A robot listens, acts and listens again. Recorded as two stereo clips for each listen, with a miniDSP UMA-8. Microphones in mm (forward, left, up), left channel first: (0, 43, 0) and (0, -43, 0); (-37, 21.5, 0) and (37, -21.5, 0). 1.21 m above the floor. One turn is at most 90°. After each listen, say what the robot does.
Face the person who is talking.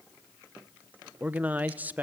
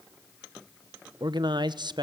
Turn 25° right.
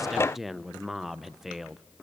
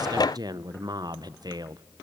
Found it: a man speaking, straight ahead, under 1 m away.